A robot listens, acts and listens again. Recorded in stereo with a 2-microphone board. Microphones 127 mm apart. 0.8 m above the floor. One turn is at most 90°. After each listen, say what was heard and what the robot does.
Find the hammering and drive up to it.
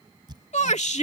The hammering: about 35° right or 145° right. Turn 35° right.
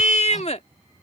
Keep listening.
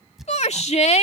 Drive 1.0 m forward.
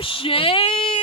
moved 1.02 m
The hammering is now 15° right. Turn 15° right.
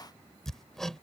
Drive 1.0 m forward.
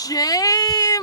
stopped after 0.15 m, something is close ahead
Keep listening.
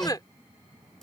Arrived at the hammering, straight ahead.